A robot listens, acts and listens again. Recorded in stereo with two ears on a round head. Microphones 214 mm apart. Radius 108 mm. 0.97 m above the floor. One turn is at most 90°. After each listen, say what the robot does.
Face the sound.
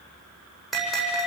Turn 30° left.
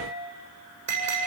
Turn 30° right.
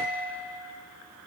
Turn 15° right.
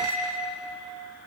Facing the bell.